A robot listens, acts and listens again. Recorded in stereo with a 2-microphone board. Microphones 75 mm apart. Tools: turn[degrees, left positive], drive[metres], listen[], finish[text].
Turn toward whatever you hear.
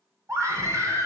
Thought: The scream: about 40° right or 140° right.
Action: turn[-40]
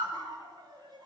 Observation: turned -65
Thought: So it is at 75° right.
Action: turn[-75]
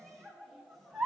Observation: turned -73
Action: finish[Facing the scream.]